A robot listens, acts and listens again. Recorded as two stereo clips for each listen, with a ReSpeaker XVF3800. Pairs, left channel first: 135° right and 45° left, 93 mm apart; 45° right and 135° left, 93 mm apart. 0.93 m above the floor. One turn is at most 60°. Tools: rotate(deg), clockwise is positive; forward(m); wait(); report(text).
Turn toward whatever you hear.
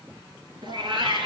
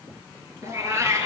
rotate(-60)
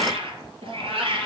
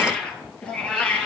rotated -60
rotate(-30)
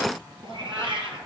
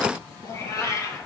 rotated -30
rotate(-10)
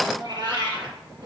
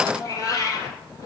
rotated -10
report("Found it: a cat meowing, straight ahead, over 4 m away.")